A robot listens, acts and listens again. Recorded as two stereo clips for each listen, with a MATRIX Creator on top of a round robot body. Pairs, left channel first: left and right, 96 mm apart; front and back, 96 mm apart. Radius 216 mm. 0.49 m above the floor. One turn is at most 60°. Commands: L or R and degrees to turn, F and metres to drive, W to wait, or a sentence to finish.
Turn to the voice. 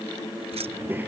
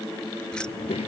R20
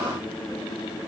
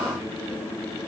W
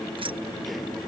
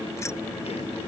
W
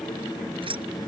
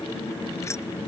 Facing the child speaking.